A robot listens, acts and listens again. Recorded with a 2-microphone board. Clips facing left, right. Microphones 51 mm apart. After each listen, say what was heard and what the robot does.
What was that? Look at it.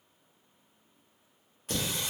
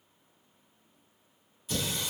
The singing: about 70° left or 110° left. Turn 70° left.
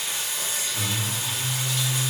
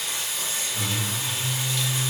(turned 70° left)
So it is at 10° left. Turn 10° left.
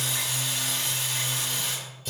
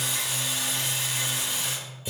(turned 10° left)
The singing is now 15° right. Turn 15° right.
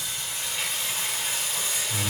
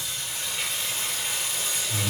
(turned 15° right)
Facing the singing, 2 to 4 m away.